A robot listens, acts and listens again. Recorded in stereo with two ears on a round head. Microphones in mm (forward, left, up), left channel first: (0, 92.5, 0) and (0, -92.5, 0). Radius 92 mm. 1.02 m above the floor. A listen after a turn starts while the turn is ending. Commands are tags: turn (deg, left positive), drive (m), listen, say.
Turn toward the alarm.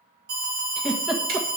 <turn deg="-55"/>
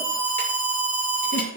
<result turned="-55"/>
<turn deg="-70"/>
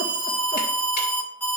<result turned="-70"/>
<turn deg="10"/>
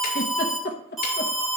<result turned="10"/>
<say>Facing the alarm, 2 to 4 m away.</say>